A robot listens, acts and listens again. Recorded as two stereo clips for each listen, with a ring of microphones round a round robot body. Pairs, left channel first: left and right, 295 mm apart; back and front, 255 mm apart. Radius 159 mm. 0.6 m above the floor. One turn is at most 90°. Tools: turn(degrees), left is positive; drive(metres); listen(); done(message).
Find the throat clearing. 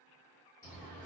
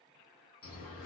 listen()
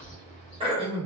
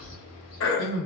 turn(degrees=-90)
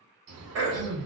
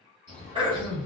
turn(degrees=-70)
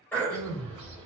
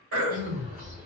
done("Facing the throat clearing.")